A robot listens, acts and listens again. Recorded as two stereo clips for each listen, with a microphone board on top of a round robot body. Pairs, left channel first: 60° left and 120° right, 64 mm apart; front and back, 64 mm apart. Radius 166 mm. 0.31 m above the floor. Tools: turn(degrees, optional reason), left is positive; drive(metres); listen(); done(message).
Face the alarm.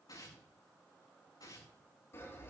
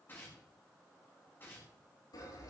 listen()
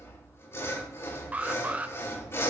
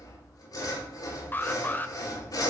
turn(degrees=-55, reason="The alarm: 55° right.")
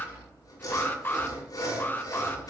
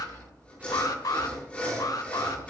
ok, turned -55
done("Facing the alarm.")